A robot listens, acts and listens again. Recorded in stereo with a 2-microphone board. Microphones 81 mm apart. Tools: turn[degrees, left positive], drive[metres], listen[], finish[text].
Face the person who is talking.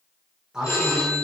Action: turn[-30]
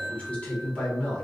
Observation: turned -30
Thought: So it is at 15° left.
Action: turn[15]
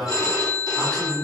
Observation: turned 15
Action: finish[Found it: a man speaking, straight ahead, 1 to 2 m away.]